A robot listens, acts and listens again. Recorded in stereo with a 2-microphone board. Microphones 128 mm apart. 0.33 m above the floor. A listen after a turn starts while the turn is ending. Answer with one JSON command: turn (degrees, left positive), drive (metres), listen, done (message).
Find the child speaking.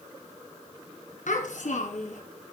{"turn": 75}
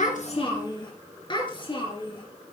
{"turn": 40}
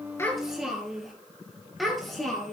{"done": "Facing the child speaking."}